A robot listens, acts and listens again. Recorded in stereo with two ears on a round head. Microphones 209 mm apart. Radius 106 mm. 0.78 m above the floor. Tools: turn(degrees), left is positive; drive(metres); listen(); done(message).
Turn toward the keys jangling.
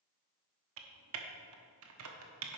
listen()
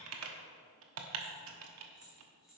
turn(degrees=30)
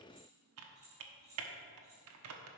turn(degrees=-30)
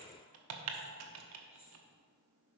listen()
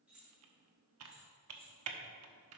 done("Found it: keys jangling, straight ahead.")